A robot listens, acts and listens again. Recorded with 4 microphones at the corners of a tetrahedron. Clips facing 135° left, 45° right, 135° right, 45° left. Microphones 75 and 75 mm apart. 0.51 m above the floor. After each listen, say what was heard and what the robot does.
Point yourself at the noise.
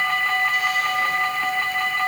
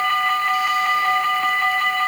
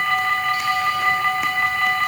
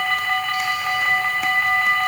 Keep listening.
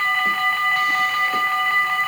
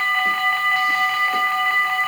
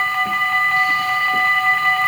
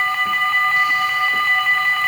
Keep listening.
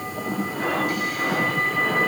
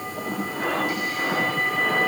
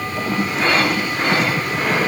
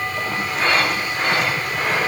I can't make out anything to turn to.